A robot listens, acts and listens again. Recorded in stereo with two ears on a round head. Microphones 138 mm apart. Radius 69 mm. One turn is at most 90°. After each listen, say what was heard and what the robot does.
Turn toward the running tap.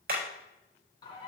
Keep listening.
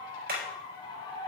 Keep listening.
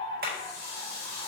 The running tap: about 20° left or 160° left. Turn 20° left.
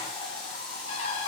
Found it: a running tap, straight ahead, over 4 m away.